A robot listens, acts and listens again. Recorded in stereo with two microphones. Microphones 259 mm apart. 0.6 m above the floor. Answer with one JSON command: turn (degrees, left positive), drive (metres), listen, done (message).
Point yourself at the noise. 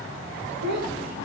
{"turn": -90}
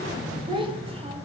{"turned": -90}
{"turn": -20}
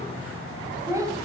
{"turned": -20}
{"turn": -15}
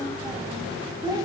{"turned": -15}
{"turn": -15}
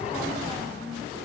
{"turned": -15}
{"done": "Facing the child speaking."}